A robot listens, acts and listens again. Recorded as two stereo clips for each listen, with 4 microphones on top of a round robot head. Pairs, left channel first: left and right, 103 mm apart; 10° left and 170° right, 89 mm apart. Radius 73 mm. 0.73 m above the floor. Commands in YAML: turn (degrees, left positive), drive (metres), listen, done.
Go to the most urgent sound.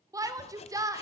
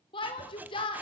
turn: -30
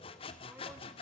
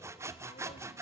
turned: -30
listen: true
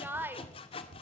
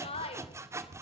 turn: -20
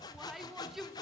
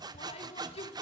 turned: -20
drive: 1.0
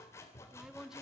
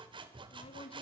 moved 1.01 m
listen: true
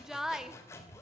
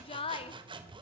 drive: 1.0
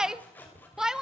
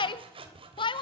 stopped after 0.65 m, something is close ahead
done: "I am next to the shout."